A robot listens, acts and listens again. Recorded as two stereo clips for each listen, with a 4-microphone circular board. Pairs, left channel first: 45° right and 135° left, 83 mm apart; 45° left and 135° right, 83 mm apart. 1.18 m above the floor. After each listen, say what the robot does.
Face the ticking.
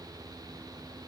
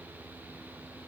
Keep listening.
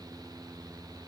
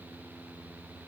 Keep listening.
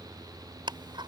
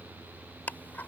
Turn 115° left.
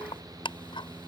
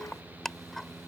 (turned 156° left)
Turn 40° right.
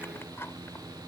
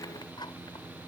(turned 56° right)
Turn 15° left.
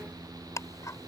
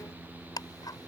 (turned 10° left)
Facing the ticking.